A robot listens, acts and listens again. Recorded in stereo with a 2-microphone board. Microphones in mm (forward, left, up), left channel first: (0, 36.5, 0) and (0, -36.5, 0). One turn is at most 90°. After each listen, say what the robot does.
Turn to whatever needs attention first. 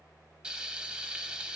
Keep listening.
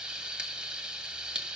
Keep listening.
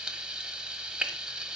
I can't make out anything urgent to turn to.